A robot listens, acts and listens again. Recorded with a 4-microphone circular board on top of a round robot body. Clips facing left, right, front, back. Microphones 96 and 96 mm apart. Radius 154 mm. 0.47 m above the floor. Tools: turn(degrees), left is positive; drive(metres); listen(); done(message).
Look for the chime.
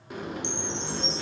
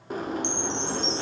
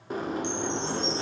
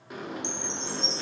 turn(degrees=-120)
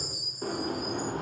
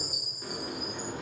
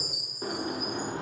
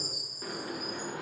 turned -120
turn(degrees=-20)
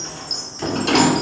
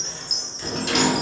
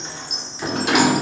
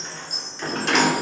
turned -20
done("Found it: a chime, straight ahead.")